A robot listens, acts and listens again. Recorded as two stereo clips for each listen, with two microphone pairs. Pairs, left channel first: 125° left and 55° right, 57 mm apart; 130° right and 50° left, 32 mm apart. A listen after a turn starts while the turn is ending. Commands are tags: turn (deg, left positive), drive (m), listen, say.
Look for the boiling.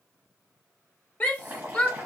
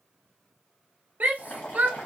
<turn deg="-115"/>
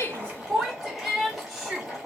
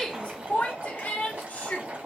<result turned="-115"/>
<turn deg="30"/>
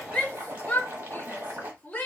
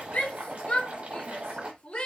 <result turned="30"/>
<say>Found it: boiling, straight ahead, 2 to 4 m away.</say>